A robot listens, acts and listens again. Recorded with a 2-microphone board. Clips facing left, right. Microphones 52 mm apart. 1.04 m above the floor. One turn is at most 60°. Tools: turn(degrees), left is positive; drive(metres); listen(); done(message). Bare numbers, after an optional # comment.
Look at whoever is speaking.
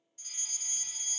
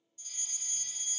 listen()
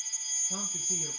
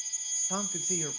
# The man speaking: about 55° right or 125° right.
turn(-55)
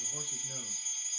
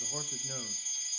listen()
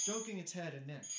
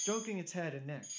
# So it is at 40° right.
turn(-40)
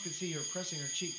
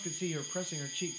# The man speaking is now 15° right.
turn(-15)
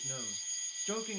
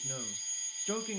done("Facing the man speaking.")